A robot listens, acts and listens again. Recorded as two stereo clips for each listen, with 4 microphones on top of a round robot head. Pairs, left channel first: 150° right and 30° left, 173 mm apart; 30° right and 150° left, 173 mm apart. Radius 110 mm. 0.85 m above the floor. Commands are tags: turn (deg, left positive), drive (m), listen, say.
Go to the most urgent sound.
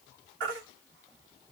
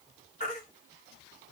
<turn deg="15"/>
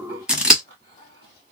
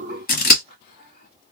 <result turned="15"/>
<listen/>
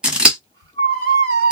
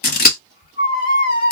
<drive m="1.0"/>
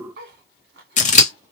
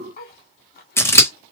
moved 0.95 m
<listen/>
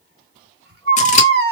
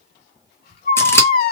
<drive m="1.0"/>
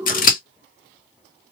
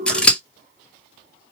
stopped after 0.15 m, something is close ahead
<listen/>
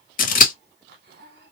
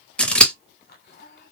<listen/>
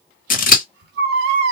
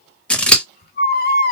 <say>I am next to the baby crying.</say>